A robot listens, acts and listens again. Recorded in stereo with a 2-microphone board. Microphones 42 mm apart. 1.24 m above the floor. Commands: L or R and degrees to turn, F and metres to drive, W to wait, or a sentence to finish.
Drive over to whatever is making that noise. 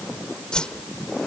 L20
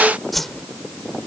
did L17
F1.0
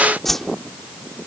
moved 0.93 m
F1.0
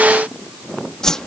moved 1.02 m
L15
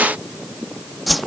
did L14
F1.0
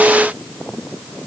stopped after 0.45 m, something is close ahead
W
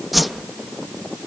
I am next to the whoosh.